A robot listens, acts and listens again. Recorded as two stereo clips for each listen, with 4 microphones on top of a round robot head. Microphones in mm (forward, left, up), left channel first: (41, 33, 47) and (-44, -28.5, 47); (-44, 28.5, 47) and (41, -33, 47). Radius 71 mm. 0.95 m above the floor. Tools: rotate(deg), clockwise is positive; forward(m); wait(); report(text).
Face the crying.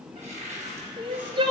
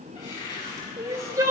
rotate(100)
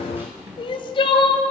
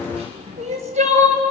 rotate(10)
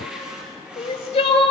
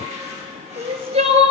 report("Facing the crying.")